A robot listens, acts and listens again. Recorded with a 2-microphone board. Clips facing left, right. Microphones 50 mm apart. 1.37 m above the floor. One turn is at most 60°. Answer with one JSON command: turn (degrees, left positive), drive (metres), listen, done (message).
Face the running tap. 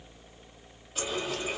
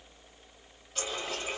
{"turn": 30}
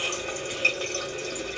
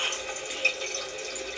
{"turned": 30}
{"turn": 60}
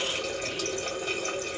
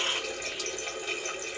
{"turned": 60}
{"turn": 60}
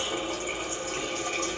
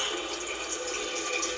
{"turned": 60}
{"turn": 30}
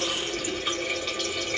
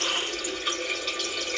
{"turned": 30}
{"done": "Found it: a running tap, straight ahead."}